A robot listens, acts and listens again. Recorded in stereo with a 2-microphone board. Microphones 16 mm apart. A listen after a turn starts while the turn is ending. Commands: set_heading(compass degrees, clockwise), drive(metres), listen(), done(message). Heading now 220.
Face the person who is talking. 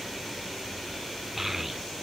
set_heading(250)
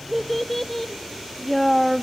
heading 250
set_heading(235)
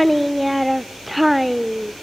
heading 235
done("Found it: a child speaking, straight ahead.")